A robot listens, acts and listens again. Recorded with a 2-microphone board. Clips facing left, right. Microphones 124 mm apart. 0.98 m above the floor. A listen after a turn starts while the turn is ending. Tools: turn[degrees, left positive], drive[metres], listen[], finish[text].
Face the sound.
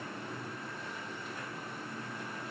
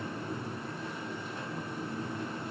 Action: listen[]
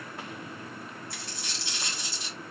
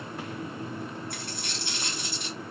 Thought: The dropped coin: about 60° right or 120° right.
Action: turn[-60]
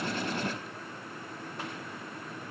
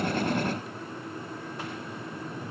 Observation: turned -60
Action: listen[]
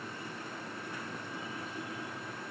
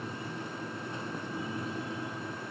Action: finish[I heard a dropped coin, but can't make it out now. It was about straight ahead or 60° right.]